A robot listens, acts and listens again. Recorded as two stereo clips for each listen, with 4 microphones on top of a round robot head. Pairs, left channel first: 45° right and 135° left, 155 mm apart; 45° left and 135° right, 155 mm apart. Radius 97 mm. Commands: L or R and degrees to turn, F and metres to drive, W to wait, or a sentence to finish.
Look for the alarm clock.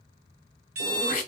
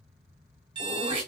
L165
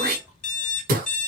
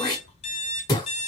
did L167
Facing the alarm clock, 1 to 2 m away.